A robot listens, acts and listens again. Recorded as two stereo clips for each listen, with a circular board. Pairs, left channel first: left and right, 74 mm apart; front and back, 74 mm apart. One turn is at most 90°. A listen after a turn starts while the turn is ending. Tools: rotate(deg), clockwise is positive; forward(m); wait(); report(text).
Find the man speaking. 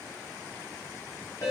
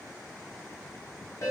wait()
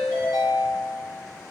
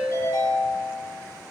wait()
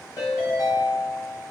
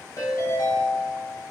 report("I can't make out a man speaking to turn to.")